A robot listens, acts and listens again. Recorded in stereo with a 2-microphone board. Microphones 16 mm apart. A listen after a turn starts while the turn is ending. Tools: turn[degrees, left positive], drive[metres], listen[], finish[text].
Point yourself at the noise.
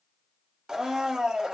Thought: The blender: about 50° right or 130° right.
Action: turn[-50]
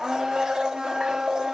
Thought: So it is at 70° right.
Action: turn[-70]
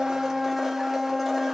Thought: The blender is now 20° right.
Action: turn[-20]
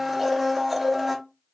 Action: finish[Facing the blender.]